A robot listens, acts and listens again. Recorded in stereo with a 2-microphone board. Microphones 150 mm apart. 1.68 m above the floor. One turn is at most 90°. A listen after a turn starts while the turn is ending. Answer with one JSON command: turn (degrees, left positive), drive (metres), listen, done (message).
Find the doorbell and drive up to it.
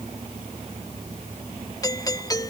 {"turn": 25}
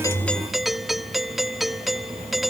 {"drive": 1.0}
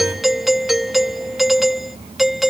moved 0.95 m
{"drive": 1.0}
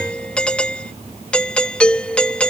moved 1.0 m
{"drive": 1.0}
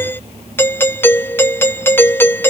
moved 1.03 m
{"turn": 15}
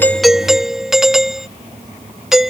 {"drive": 1.0}
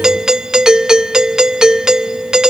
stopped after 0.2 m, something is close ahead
{"done": "I am next to the doorbell."}